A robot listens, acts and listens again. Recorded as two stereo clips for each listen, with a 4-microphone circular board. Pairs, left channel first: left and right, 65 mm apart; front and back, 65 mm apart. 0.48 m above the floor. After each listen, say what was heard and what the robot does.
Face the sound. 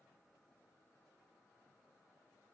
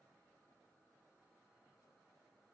Keep listening.
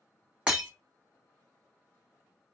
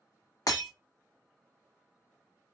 The breaking glass: 20° right. Turn 20° right.
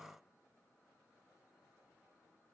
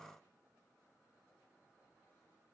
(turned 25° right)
Facing where the breaking glass came from. I can't hear it now.